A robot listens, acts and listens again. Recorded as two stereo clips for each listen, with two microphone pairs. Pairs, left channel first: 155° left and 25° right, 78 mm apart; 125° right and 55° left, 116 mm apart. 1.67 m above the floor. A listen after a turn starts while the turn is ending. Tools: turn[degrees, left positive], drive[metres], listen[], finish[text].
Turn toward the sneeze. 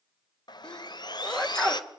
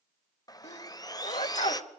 Thought: The sneeze: 125° right.
Action: turn[-125]
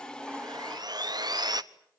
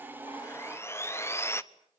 Action: finish[Facing where the sneeze came from. I can't hear it now.]